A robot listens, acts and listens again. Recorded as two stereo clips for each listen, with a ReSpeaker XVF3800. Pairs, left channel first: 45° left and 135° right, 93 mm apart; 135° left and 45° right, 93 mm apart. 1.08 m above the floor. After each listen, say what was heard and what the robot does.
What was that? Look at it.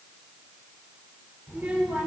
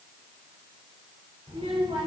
The child speaking: 60° right. Turn 60° right.
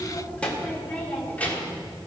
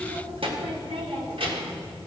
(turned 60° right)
The child speaking is now 25° right. Turn 25° right.
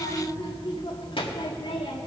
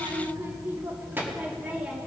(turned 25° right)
The child speaking is now 35° left. Turn 35° left.
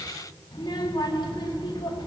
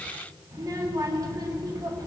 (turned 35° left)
Facing the child speaking.